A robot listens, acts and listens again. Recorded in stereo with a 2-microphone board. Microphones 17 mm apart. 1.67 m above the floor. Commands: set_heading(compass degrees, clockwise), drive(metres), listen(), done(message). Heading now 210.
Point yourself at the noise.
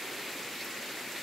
listen()
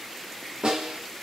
set_heading(300)
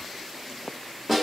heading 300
done("Facing the snare drum, 1 to 2 m away.")